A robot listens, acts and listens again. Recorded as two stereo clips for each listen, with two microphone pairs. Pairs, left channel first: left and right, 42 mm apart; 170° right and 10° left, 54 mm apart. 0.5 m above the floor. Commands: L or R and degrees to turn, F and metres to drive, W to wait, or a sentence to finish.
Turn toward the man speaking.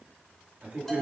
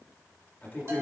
R130
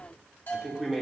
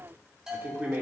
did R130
Found it: a man speaking, straight ahead.